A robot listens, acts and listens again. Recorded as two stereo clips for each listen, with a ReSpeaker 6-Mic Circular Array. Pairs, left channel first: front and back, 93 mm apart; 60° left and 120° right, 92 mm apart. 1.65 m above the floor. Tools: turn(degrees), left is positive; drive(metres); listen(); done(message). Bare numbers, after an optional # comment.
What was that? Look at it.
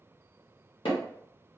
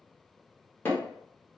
done("Facing the hammering.")